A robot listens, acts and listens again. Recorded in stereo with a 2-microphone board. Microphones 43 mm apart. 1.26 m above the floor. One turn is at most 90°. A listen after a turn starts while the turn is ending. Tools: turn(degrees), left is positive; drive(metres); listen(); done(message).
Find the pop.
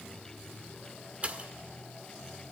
turn(degrees=-35)
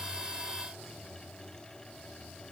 listen()
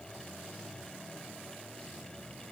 done("I heard a pop, but can't make it out now. It was about straight ahead or 110° right.")